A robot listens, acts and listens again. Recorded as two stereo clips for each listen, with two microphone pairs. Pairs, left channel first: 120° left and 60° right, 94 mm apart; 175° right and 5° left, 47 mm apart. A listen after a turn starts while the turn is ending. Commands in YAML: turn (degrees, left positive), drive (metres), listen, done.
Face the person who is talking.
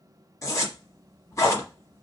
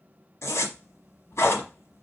listen: true
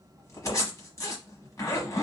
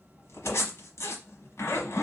listen: true
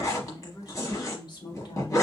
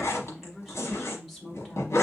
turn: 95
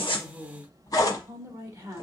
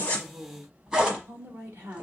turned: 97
done: "Found it: a woman speaking, straight ahead, 1 to 2 m away."